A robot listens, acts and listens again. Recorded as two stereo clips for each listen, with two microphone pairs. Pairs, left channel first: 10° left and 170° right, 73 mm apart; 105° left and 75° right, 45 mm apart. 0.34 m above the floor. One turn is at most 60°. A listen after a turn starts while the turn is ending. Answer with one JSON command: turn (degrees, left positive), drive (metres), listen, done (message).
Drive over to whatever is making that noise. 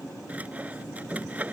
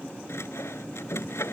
{"turn": 60}
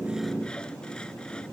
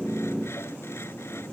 {"turn": 60}
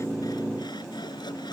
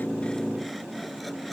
{"listen": true}
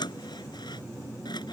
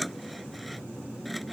{"turn": 15}
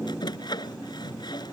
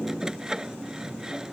{"drive": 1.0}
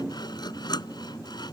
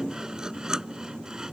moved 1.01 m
{"drive": 1.0}
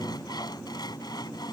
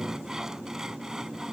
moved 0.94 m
{"drive": 1.0}
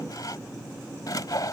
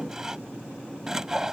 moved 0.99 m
{"drive": 1.0}
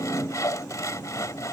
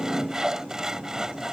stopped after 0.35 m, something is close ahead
{"done": "I am next to the sawing."}